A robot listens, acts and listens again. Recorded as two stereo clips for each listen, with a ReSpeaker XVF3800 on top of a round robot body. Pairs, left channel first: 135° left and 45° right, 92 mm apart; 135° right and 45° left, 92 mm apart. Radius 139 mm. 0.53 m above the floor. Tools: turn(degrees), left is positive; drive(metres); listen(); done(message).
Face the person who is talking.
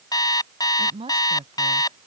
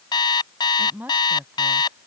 turn(degrees=-25)
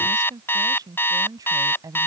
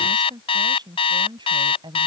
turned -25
turn(degrees=10)
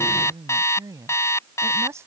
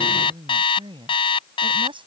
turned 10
turn(degrees=15)
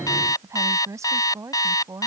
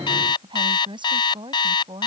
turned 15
turn(degrees=15)
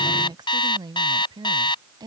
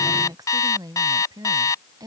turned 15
done("Found it: a woman speaking, straight ahead.")